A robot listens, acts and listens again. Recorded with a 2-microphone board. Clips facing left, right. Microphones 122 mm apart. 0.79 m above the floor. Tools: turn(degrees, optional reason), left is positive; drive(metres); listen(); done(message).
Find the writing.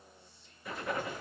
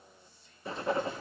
turn(degrees=-30, reason="The writing: about 30° right or 150° right.")
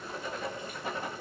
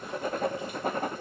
turn(degrees=-115, reason="So it is at 115° right.")
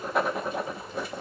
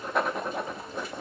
done("Found it: writing, straight ahead, under 1 m away.")